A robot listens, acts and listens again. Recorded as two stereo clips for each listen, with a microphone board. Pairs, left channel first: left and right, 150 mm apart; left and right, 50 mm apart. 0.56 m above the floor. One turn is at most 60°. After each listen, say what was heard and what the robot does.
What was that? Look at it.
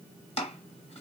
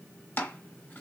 The chopping: about 40° left or 140° left. Turn 40° left.
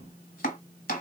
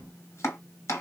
So it is at 100° left. Turn 60° left.
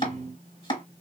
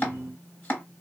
The chopping is now 35° left. Turn 35° left.
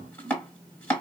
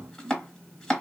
The chopping is now 10° left. Turn 10° left.
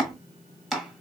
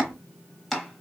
Found it: chopping, straight ahead, 1 to 2 m away.